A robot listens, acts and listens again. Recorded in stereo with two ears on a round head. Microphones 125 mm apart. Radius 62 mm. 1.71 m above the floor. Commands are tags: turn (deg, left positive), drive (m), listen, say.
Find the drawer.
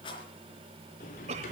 <turn deg="65"/>
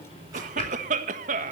<turn deg="45"/>
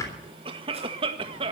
<turn deg="25"/>
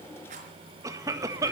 <listen/>
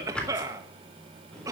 <say>Found it: a drawer, straight ahead, 2 to 4 m away.</say>